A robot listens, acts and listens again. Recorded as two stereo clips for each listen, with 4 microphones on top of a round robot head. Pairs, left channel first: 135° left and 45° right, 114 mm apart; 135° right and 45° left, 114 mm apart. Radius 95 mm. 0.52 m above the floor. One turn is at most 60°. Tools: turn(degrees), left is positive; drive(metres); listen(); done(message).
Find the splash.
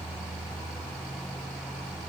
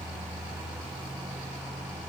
listen()
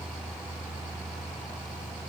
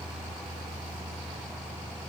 listen()
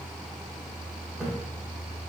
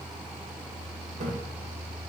turn(degrees=35)
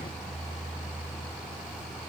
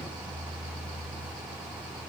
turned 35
done("Facing where the splash came from. I can't hear it now.")